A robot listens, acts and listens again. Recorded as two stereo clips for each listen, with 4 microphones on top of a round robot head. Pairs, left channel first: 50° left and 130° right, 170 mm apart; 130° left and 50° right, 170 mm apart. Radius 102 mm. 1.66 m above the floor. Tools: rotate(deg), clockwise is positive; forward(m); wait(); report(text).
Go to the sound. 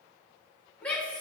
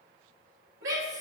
rotate(35)
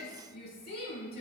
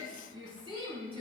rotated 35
rotate(-10)
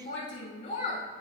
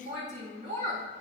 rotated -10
forward(1.0)
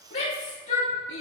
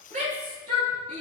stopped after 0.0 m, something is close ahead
report("Something is in my way. I am facing the shout but have not reached it.")